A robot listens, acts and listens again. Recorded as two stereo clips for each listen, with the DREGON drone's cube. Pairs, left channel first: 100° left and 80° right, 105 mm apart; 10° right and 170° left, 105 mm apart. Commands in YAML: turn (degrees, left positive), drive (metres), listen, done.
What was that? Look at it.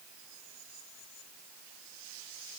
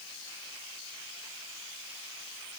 listen: true
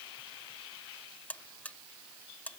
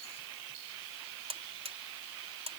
turn: 175
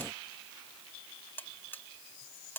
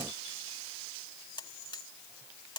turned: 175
turn: 30
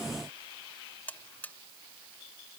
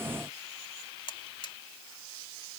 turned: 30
turn: 25
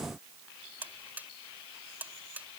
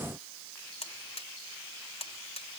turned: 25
done: "Facing the buzzer."